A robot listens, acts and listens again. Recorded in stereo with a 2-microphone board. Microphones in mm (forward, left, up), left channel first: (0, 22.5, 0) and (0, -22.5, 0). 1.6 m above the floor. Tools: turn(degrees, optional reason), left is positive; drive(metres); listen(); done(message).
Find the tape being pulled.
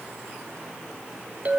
listen()
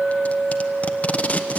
turn(degrees=30, reason="The tape being pulled: about 30° left or 150° left.")
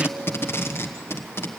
turn(degrees=120, reason="So it is at 120° left.")
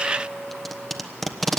done("Found it: tape being pulled, straight ahead, 1 to 2 m away.")